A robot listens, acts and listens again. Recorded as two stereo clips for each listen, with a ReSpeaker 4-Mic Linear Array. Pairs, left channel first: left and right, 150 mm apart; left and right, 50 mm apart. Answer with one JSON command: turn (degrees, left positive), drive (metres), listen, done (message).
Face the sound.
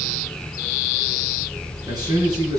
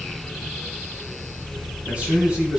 {"turn": -25}
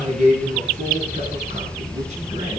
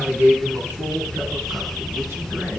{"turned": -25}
{"turn": -130}
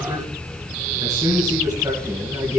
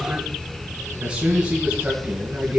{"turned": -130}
{"turn": -25}
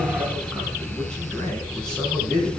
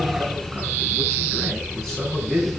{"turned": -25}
{"done": "Facing the man speaking."}